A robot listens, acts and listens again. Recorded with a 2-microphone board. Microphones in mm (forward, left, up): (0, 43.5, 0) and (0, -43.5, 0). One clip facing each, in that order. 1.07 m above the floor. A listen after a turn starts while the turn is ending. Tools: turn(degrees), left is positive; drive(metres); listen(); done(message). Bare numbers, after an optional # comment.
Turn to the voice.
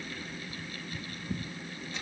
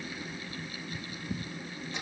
listen()
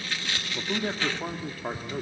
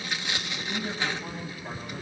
turn(90)
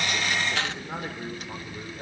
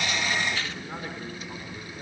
# So it is at 20° left.
turn(20)
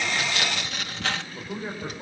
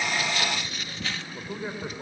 done("Facing the man speaking, over 4 m away.")